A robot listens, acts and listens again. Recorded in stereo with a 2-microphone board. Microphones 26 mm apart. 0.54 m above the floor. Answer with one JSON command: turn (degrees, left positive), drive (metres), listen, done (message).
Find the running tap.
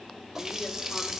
{"turn": -15}
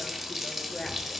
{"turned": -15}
{"done": "Facing the running tap, 1 to 2 m away."}